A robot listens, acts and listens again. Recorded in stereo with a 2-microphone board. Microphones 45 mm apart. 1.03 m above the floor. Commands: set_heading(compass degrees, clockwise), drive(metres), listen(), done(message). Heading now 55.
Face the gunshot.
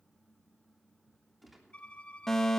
set_heading(25)
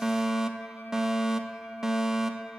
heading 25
listen()
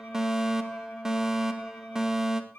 done("I heard a gunshot, but can't make it out now. It was about 30° right or 150° left.")